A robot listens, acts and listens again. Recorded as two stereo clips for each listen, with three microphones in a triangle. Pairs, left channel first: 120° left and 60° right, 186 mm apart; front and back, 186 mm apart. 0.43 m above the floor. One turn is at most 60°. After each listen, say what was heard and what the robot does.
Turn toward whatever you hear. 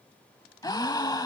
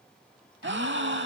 The gasp: 175° right. Turn 60° right.
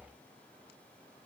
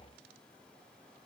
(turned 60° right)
Nothing new. It was at 115° right. Turn 60° right.
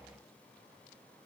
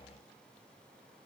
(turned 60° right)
Nothing new. It was at 55° right. Turn 55° right.
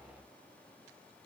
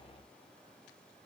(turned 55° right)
I heard a gasp from this way, but can't make it out now.